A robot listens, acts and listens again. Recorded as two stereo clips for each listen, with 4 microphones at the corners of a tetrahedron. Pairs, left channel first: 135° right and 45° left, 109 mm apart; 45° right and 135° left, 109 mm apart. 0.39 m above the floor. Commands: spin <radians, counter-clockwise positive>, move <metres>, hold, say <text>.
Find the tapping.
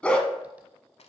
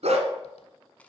hold
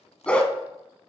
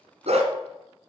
hold
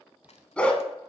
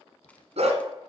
say I can't make out tapping, only crushing and a dog barking.